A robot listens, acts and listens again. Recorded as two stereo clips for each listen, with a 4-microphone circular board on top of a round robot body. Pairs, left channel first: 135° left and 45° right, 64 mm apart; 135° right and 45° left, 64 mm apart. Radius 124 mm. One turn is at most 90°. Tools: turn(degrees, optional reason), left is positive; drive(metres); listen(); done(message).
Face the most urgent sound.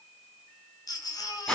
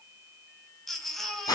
turn(degrees=90, reason="The baby crying: 135° left.")
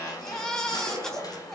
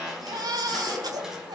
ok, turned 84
turn(degrees=55, reason="The baby crying is now 55° left.")
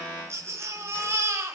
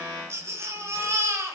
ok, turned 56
done("Found it: a baby crying, straight ahead, 2 to 4 m away.")